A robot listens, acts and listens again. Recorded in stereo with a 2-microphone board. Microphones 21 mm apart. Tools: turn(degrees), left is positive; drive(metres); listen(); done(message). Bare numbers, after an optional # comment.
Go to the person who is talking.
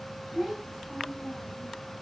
turn(-30)
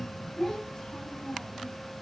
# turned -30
# So it is at 20° left.
turn(20)
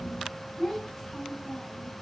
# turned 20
drive(1.0)
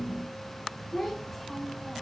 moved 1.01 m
drive(1.0)
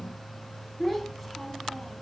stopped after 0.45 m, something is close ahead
done("I am next to the child speaking.")